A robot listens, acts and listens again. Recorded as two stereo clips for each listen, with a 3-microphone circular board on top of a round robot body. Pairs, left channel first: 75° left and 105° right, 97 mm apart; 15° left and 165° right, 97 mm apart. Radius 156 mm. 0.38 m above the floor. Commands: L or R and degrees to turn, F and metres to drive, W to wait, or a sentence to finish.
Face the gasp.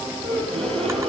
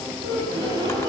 R115
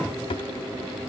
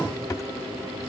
I heard a gasp from this way, but can't make it out now.